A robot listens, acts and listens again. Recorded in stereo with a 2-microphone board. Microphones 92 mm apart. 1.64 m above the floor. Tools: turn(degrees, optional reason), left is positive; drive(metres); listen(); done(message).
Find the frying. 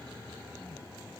listen()
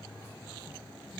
listen()
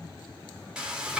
turn(degrees=-30)
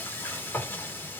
turn(degrees=25, reason="So it is at 25° left.")
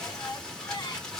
turn(degrees=10, reason="The frying is now 10° left.")
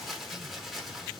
done("Facing the frying.")